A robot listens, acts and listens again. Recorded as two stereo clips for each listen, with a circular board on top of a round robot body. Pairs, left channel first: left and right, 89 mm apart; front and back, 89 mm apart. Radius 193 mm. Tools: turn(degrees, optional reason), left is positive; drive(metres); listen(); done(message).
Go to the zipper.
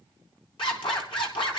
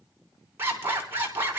turn(degrees=115, reason="The zipper: 115° left.")
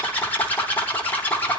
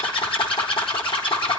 turn(degrees=20, reason="The zipper is now 20° left.")
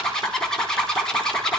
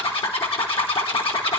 drive(metres=1.0)
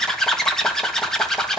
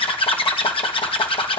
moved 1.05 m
drive(metres=1.0)
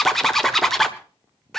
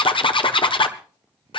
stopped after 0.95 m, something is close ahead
done("Arrived at the zipper, straight ahead.")